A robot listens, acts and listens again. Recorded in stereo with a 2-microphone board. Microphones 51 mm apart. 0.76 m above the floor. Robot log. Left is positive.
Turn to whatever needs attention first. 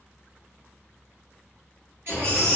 note: The baby crying: about 50° right or 130° right.
cmd yaw -50
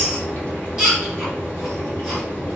end: Facing the baby crying, 1 to 2 m away.